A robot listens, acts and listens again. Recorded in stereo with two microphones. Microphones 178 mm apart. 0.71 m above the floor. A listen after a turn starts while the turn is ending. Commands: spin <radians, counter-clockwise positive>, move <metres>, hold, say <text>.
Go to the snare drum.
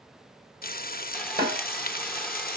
spin -1.13
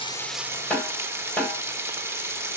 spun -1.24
move 1.0
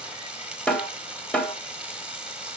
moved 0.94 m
move 1.0
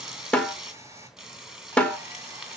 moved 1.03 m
move 1.0
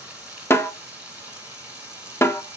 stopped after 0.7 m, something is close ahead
spin 0.26
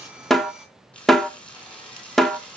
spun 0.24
say Arrived at the snare drum, straight ahead.